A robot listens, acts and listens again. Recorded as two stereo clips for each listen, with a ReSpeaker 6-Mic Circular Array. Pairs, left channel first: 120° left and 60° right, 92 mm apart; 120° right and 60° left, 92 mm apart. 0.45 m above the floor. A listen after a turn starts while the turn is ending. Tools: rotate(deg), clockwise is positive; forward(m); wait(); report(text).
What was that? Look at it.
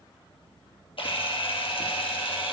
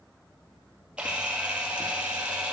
rotate(-140)
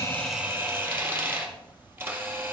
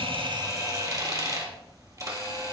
report("Facing the camera shutter, 2 to 4 m away.")